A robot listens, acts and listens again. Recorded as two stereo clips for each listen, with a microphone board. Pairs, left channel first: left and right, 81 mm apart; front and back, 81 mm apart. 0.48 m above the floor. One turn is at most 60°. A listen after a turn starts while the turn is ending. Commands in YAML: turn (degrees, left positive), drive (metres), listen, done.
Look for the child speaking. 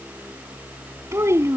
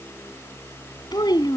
turn: -35
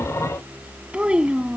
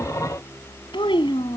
turn: -10
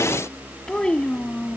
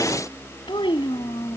turn: 15
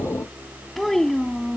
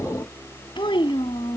turn: 10
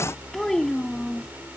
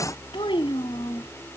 done: "Facing the child speaking."